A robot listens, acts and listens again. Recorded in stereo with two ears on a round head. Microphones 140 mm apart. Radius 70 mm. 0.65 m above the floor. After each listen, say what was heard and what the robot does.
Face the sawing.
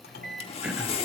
The sawing: about 40° left or 140° left. Turn 40° left.
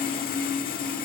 So it is at 95° left. Turn 95° left.
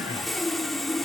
Found it: sawing, straight ahead, 1 to 2 m away.